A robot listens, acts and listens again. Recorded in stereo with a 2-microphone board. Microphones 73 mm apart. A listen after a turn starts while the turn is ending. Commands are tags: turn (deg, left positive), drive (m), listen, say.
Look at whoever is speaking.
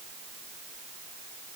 <listen/>
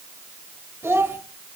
<turn deg="-35"/>
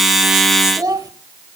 <turn deg="-105"/>
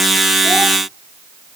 <listen/>
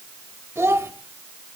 <turn deg="-45"/>
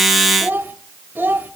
<turn deg="-35"/>
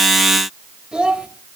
<turn deg="-15"/>
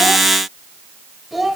<say>Facing the child speaking.</say>